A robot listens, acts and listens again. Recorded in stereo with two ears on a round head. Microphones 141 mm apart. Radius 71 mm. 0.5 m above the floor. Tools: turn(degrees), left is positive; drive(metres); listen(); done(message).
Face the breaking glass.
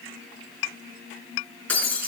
turn(degrees=30)
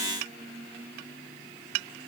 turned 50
listen()
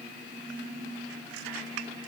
done("I heard breaking glass, but can't make it out now. It was about 40° right or 120° left.")